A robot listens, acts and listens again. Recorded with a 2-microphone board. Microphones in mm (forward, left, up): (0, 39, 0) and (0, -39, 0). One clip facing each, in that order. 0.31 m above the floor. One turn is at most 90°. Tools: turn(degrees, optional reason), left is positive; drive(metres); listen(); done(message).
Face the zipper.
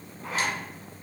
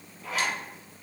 turn(degrees=35, reason="The zipper: about 35° left or 145° left.")
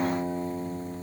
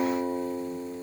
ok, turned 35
listen()
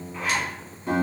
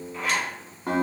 done("Facing the zipper, 1 to 2 m away.")